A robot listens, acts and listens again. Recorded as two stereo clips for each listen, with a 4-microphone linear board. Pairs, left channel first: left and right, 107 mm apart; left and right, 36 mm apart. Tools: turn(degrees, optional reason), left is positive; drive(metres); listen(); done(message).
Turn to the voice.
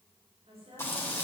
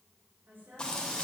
turn(degrees=-70, reason="The woman speaking: about 70° right or 110° right.")
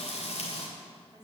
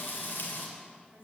turn(degrees=-45, reason="So it is at 45° right.")
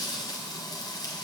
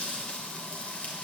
listen()
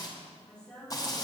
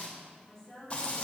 turn(degrees=10, reason="The woman speaking is now 10° left.")
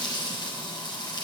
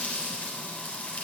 listen()
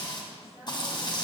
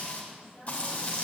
listen()
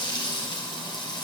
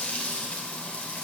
done("I heard a woman speaking from this way, but can't make it out now.")